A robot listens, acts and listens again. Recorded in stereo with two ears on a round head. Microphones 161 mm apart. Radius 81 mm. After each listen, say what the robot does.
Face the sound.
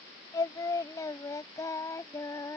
Turn 15° left.
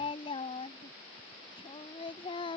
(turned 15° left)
Turn 30° left.
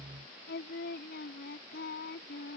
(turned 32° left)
Turn 120° left.
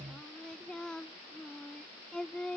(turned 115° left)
Found it: singing, straight ahead.